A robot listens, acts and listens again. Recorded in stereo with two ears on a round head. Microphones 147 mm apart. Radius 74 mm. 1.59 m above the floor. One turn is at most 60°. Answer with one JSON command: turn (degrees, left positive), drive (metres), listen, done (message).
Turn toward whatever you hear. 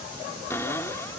{"turn": 15}
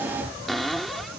{"done": "Found it: a cupboard door, straight ahead."}